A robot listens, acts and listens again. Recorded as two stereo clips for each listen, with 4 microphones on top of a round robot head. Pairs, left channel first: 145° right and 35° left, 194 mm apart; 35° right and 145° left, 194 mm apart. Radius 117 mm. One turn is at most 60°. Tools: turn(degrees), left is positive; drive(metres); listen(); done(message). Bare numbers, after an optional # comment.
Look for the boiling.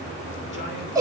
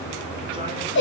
listen()
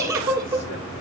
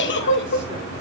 listen()
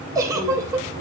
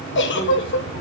done("I can't make out boiling, only a giggle.")